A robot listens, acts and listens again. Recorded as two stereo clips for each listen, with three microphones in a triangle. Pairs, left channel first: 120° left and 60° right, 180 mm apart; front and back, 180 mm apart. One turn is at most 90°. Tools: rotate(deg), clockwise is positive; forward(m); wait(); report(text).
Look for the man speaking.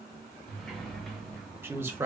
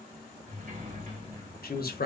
rotate(-15)
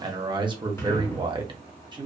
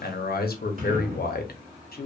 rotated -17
report("Found it: a man speaking, straight ahead.")